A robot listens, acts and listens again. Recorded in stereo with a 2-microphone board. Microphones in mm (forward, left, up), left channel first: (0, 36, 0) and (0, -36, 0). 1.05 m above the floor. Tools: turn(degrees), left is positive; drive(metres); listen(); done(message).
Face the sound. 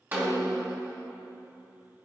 turn(degrees=-30)
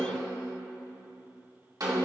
turn(degrees=-120)
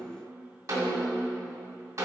turn(degrees=-45)
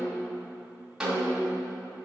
turn(degrees=-10)
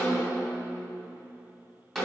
done("Facing the snare drum.")